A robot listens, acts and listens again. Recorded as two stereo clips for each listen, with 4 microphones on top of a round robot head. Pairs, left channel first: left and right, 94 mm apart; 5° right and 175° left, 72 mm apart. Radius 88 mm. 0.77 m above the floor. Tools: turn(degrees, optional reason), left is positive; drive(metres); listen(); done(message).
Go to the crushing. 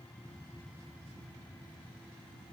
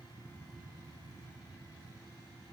listen()
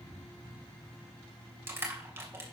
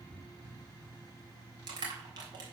turn(degrees=-155, reason="The crushing: 155° right.")
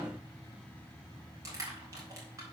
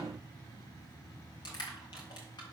turn(degrees=-30, reason="The crushing is now 30° right.")
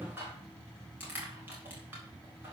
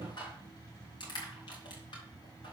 turn(degrees=-20, reason="The crushing is now 20° right.")
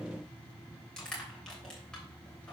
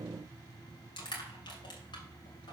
drive(metres=1.0)
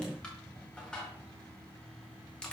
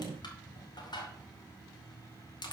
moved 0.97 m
turn(degrees=10, reason="The crushing is now 10° left.")
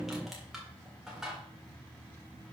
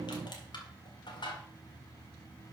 drive(metres=1.0)
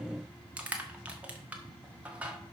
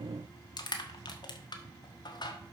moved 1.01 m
turn(degrees=-15, reason="The crushing is now 15° right.")
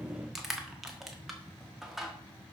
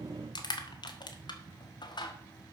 drive(metres=1.0)
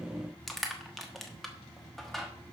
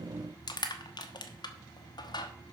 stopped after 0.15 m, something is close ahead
done("I am next to the crushing.")